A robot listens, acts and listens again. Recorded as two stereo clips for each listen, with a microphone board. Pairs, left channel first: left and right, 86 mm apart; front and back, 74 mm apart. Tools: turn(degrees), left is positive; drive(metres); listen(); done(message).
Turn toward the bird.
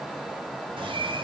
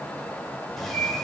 turn(degrees=-85)
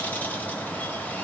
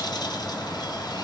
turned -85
turn(degrees=20)
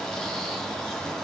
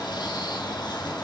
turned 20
done("Facing the bird.")